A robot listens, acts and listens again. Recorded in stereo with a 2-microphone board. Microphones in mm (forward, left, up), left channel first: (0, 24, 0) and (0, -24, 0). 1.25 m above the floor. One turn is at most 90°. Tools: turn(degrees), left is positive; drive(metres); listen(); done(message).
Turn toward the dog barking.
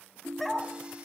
turn(degrees=30)
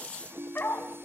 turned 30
turn(degrees=90)
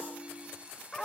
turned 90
turn(degrees=10)
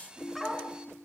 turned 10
done("Facing the dog barking.")